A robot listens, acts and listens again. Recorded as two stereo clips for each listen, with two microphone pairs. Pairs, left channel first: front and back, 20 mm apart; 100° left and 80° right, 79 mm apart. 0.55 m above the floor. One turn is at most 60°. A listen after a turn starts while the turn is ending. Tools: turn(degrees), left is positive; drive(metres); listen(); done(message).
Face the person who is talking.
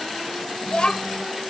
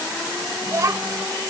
turn(degrees=-35)
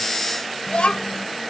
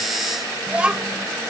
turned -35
done("Found it: a child speaking, straight ahead.")